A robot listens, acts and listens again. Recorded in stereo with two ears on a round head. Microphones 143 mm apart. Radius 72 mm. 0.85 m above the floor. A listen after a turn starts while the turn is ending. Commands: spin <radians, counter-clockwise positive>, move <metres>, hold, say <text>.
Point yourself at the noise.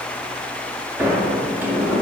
spin -0.52
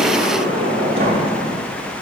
spin -2.36
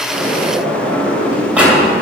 spin -0.17
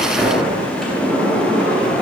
say Facing the sliding door, 2 to 4 m away.